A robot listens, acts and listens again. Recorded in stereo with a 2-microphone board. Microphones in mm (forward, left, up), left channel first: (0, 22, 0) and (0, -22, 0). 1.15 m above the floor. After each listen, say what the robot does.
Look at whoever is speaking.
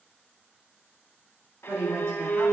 Turn 90° right.
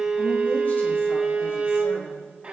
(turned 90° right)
Keep listening.
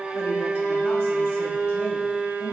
Keep listening.
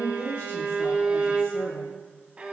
Turn 80° left.
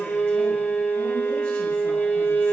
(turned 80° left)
Keep listening.
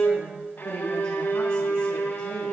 Turn 20° left.
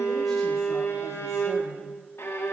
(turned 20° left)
Keep listening.
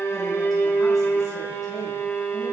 Keep listening.
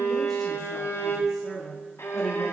Found it: a woman speaking, straight ahead, 2 to 4 m away.